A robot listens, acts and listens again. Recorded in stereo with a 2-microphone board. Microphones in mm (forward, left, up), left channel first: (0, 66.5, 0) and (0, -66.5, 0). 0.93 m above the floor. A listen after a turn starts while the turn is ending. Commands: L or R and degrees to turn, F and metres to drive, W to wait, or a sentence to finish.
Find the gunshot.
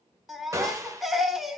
R25
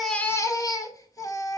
W
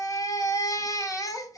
I heard a gunshot, but can't make it out now. It was about straight ahead or 130° right.